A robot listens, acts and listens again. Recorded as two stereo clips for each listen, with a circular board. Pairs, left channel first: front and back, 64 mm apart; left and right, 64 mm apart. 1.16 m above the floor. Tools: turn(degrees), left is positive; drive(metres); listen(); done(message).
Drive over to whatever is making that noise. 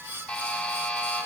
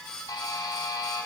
turn(degrees=75)
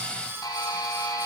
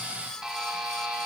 turn(degrees=-10)
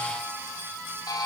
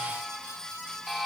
drive(metres=1.0)
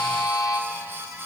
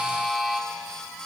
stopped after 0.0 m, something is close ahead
done("Something is in my way. I am facing the buzzer but have not reached it.")